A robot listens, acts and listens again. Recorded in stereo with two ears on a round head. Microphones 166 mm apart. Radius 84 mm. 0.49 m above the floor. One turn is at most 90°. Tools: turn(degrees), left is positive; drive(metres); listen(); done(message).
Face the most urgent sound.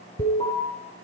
turn(degrees=30)
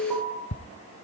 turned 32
done("Found it: an alarm, straight ahead.")